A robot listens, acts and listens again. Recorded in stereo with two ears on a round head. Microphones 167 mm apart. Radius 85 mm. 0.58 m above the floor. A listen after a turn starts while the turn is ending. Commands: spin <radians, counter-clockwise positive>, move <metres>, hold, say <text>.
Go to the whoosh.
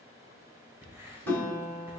spin -1.05
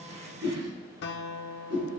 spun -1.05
spin -1.05
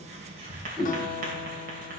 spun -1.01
move 1.0
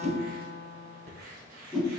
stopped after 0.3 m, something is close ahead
say Blocked. The whoosh is further on, straight ahead.